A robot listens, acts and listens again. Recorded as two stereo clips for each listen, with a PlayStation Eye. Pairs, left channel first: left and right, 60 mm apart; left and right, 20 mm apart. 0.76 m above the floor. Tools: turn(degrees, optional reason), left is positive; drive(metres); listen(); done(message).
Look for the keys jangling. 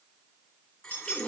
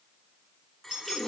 turn(degrees=-45, reason="The keys jangling: about 45° right or 135° right.")
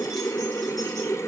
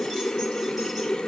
listen()
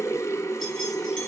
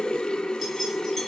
listen()
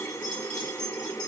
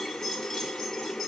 turn(degrees=20, reason="So it is at 20° left.")
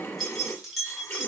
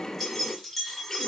done("Found it: keys jangling, straight ahead.")